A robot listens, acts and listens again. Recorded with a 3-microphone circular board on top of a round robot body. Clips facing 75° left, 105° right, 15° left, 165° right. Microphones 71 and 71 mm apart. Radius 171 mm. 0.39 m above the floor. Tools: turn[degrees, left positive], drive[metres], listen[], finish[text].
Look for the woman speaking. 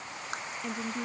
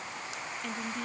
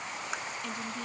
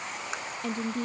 Thought: The woman speaking: 145° left.
Action: turn[145]
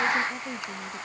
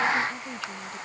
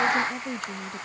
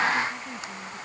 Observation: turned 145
Action: finish[Facing the woman speaking.]